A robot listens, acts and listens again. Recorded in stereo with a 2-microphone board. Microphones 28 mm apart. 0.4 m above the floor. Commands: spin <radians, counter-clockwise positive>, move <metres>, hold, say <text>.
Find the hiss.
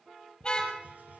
spin -1.31
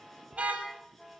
hold
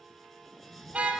say Found it: a hiss, straight ahead.